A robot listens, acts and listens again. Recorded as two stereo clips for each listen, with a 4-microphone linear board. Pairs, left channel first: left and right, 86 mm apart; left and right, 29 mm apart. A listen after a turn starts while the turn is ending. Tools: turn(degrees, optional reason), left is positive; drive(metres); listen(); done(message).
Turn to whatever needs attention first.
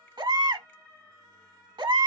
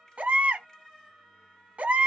turn(degrees=-65, reason="The baby crying: about 65° right or 115° right.")
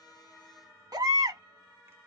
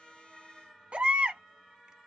turn(degrees=-50, reason="So it is at 50° right.")
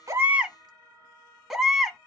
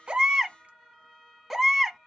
done("Found it: a baby crying, straight ahead.")